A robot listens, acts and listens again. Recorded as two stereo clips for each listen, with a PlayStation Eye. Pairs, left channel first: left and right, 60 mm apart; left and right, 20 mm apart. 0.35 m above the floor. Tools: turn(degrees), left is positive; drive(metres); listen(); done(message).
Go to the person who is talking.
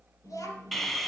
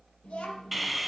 turn(degrees=70)
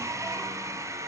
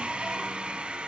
listen()
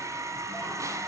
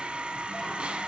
listen()
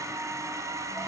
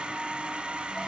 done("I heard a child speaking, but can't make it out now. It was about straight ahead or 40° left. I did not reach it.")